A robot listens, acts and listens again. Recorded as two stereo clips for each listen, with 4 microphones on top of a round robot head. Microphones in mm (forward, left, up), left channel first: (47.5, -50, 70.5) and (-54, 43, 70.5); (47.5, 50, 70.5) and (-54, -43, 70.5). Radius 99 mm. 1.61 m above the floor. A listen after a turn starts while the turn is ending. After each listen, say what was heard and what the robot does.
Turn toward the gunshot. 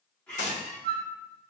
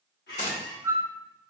Found it: a gunshot, straight ahead, 1 to 2 m away.